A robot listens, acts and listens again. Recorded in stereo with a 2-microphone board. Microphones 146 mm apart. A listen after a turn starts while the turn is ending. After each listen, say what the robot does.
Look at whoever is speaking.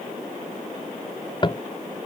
Keep listening.
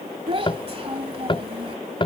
Turn 40° right.
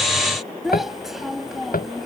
Found it: a child speaking, straight ahead.